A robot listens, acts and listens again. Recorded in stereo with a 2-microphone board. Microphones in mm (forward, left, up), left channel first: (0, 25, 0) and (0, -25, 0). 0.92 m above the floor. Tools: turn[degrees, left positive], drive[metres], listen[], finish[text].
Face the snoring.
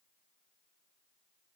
Action: listen[]
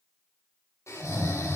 Action: turn[90]
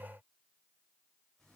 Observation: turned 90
Action: listen[]
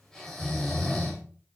Thought: The snoring is now 10° left.
Action: turn[10]
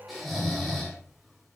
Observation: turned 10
Action: finish[Found it: snoring, straight ahead.]